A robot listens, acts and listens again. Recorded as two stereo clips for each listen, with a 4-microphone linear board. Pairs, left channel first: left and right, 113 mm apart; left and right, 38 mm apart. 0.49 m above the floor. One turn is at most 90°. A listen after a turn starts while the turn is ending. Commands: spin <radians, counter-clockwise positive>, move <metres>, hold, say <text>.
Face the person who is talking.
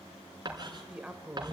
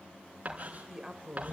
spin -0.52
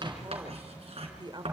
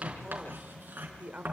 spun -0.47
spin -1.57
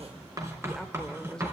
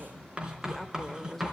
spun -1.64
say Found it: a woman speaking, straight ahead, 1 to 2 m away.